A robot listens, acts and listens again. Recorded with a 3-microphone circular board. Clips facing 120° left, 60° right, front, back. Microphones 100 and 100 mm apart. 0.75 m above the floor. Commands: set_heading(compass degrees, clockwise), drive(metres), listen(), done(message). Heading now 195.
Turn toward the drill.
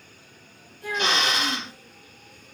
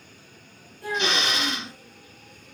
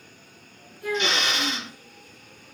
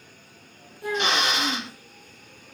set_heading(35)
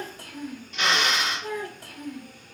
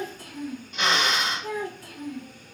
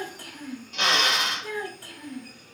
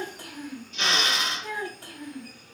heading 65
set_heading(35)
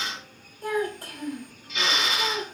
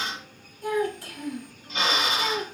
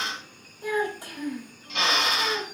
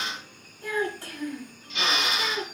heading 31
done("Found it: a drill, straight ahead, 1 to 2 m away.")